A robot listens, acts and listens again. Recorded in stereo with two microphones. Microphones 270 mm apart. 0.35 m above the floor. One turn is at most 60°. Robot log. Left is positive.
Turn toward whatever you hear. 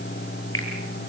note: The finger snap: about 50° left or 130° left.
cmd yaw +50
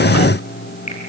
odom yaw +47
cmd idle
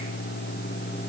cmd idle
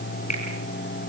note: So it is at 85° left.
cmd yaw +60
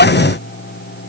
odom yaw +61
note: Nothing new. It was at 25° left.
cmd yaw +25
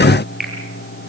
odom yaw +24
end: Facing the finger snap.